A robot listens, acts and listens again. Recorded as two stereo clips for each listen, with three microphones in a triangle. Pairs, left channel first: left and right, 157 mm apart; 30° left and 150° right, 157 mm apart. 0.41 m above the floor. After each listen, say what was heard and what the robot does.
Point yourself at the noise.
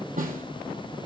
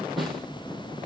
The snare drum: 60° right. Turn 60° right.
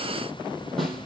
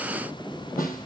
Found it: a snare drum, straight ahead.